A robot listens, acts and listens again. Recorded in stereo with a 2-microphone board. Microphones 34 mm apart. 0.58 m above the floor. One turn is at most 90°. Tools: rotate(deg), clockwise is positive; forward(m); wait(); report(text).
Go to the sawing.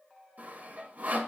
rotate(55)
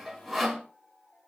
forward(1.0)
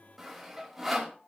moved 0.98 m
rotate(10)
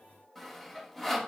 forward(1.0)
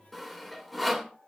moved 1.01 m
forward(1.0)
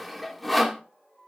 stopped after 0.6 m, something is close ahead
report("Arrived at the sawing, straight ahead.")